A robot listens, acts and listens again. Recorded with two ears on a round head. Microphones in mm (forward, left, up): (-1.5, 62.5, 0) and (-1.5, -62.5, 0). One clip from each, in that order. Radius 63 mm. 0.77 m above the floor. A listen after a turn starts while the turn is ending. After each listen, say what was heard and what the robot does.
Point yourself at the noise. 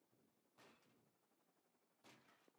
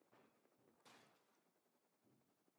Keep listening.
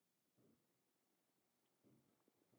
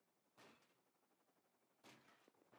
Keep listening.
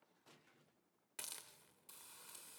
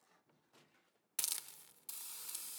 Turn 90° right.
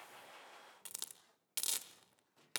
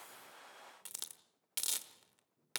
Facing the hiss, 1 to 2 m away.